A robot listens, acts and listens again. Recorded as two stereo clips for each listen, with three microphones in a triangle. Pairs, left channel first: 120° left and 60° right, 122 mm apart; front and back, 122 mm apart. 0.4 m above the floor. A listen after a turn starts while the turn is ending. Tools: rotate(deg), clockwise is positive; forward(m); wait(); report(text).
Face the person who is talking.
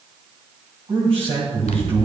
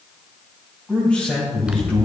rotate(80)
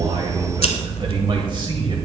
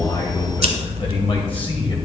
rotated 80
rotate(25)
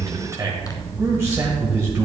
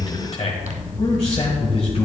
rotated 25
report("Facing the man speaking, 1 to 2 m away.")